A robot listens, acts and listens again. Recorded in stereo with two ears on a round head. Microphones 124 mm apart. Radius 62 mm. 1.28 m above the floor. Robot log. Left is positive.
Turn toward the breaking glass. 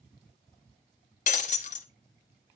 note: The breaking glass: about 55° left or 125° left.
cmd yaw +55
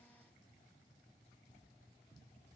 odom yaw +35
cmd idle
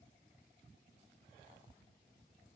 end: I heard breaking glass, but can't make it out now. It was about 20° left or 90° left.